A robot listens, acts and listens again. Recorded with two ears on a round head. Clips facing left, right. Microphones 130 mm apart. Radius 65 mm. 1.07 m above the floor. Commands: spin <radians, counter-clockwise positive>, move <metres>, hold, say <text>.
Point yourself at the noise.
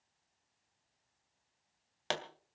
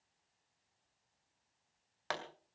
spin 0.52
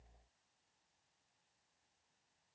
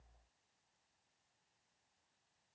hold
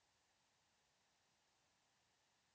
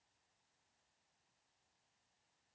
say I heard a pop, but can't make it out now. It was about straight ahead or 120° left.